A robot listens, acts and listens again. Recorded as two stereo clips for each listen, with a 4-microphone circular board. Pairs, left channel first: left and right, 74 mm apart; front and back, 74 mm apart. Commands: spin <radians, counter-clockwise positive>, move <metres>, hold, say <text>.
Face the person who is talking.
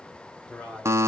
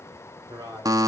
spin 2.88
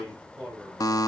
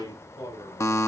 say Found it: a man speaking, straight ahead, over 4 m away.